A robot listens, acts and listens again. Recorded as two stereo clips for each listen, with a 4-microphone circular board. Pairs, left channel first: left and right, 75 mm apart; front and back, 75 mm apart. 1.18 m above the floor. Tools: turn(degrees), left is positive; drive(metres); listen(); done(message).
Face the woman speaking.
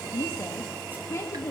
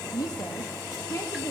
turn(degrees=45)
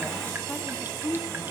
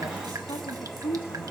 done("Found it: a woman speaking, straight ahead, 2 to 4 m away.")